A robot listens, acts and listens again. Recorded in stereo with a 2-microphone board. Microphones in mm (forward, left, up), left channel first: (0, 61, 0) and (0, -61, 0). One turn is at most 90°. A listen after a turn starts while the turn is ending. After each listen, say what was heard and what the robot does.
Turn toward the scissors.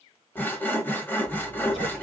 The scissors: about 50° left or 130° left. Turn 50° left.
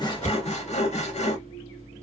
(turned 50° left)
So it is at 80° left. Turn 80° left.
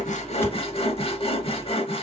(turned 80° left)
The scissors is now 10° left. Turn 10° left.
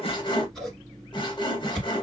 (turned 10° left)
Facing the scissors.